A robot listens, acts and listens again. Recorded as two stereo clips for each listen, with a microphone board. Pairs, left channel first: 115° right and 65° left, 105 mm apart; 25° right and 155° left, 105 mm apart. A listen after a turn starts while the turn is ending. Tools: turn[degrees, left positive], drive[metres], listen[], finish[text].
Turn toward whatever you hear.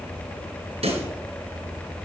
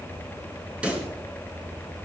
Thought: The pop: 80° left.
Action: turn[80]
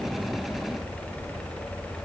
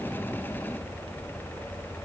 Action: finish[Facing where the pop came from. I can't hear it now.]